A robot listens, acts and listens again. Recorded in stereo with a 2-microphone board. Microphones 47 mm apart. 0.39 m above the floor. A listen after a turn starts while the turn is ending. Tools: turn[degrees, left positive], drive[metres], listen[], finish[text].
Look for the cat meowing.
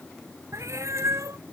Action: turn[-90]
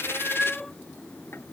Action: finish[Facing the cat meowing.]